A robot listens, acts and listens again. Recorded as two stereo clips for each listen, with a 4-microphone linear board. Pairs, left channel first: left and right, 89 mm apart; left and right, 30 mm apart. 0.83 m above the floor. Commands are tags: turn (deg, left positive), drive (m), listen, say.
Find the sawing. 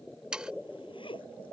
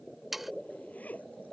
<turn deg="-30"/>
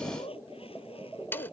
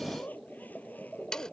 <turn deg="25"/>
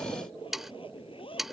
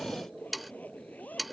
<say>Facing the sawing.</say>